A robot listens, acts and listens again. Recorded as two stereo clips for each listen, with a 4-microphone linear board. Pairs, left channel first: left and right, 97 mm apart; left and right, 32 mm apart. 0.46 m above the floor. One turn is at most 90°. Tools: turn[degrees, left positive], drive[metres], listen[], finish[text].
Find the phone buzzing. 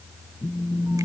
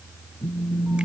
Action: turn[90]
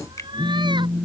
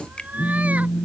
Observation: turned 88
Thought: So it is at 10° left.
Action: turn[10]
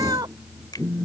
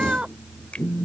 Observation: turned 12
Action: finish[Facing the phone buzzing.]